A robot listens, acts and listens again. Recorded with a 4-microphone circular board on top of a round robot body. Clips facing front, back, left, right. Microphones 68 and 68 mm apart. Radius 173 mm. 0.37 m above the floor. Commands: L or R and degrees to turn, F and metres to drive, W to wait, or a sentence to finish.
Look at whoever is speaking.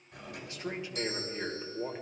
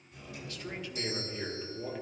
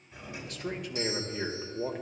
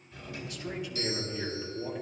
L65
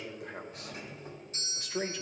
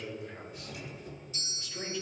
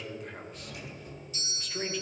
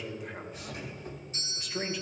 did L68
Facing the man speaking, 2 to 4 m away.